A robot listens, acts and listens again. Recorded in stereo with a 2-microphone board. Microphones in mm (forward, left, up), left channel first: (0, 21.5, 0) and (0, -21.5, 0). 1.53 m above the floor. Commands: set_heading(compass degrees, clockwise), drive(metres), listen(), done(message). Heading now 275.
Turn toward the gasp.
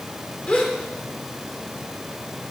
set_heading(245)
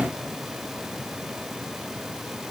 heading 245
listen()
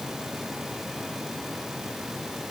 done("I heard a gasp, but can't make it out now. It was about straight ahead or 120° left.")